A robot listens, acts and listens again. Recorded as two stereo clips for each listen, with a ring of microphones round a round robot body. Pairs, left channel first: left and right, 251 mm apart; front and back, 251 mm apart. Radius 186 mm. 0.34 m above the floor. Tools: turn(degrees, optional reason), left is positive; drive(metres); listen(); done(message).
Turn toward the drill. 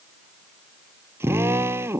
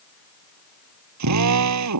turn(degrees=-175, reason="The drill: 175° right.")
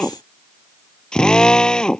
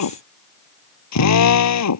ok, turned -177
done("Found it: a drill, straight ahead.")